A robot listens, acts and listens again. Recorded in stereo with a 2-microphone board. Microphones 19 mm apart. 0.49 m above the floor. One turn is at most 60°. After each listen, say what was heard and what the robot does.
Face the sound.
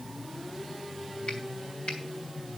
The finger snap: about 60° left or 120° left. Turn 60° left.
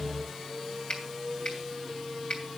So it is at 55° left. Turn 55° left.
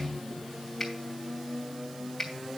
Facing the finger snap, 2 to 4 m away.